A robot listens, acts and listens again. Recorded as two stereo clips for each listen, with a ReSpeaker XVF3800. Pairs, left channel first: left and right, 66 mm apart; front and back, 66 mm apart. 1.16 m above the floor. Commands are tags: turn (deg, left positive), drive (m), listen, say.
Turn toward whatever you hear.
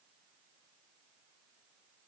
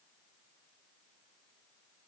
<listen/>
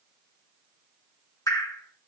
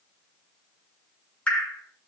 <turn deg="70"/>
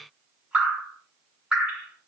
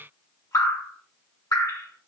<turn deg="-15"/>
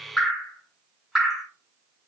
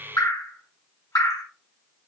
<say>Found it: dripping, straight ahead.</say>